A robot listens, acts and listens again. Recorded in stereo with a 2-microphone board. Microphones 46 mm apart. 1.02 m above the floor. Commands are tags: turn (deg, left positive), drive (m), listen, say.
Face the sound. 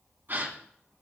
<turn deg="-45"/>
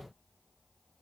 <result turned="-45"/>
<listen/>
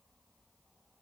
<say>I heard a gasp, but can't make it out now. It was about straight ahead or 90° right.</say>